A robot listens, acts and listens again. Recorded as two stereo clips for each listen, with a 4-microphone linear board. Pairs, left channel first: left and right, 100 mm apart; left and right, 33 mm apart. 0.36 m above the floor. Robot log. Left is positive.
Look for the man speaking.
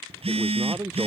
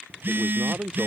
note: The man speaking: about 30° right or 150° right.
cmd yaw -30
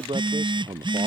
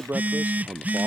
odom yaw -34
note: So it is at 115° right.
cmd yaw -115
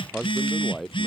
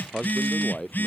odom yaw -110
end: Found it: a man speaking, straight ahead.